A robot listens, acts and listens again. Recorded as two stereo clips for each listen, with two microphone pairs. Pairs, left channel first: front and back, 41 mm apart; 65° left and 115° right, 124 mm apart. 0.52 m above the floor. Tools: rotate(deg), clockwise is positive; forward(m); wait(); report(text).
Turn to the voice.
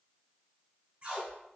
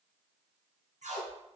wait()
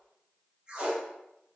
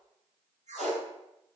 wait()
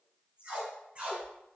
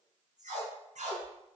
report("I can't make out anyone speaking to turn to.")